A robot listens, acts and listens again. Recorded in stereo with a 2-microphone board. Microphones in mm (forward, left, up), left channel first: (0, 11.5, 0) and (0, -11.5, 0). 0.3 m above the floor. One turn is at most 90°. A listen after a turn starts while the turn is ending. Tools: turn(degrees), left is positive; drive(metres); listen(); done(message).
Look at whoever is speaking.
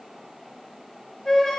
listen()
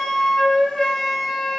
listen()
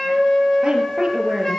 turn(degrees=-35)
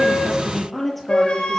done("Facing the woman speaking, over 4 m away.")